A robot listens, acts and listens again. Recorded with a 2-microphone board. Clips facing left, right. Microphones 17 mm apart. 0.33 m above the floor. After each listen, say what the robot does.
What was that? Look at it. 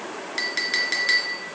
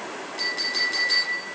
Turn 50° left.
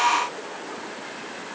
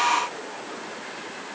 Keep listening.
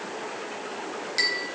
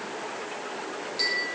Turn 75° left.
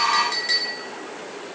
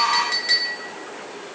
Turn 15° right.
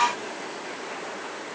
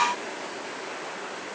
Keep listening.
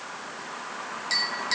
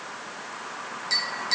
Found it: a clink, straight ahead.